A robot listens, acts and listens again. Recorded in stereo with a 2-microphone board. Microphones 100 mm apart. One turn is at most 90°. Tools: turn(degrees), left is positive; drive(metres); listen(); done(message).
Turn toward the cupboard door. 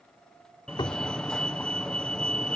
turn(degrees=50)
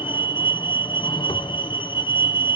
listen()
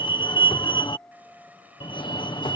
listen()
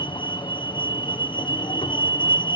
done("I heard a cupboard door, but can't make it out now. It was about straight ahead or 80° left.")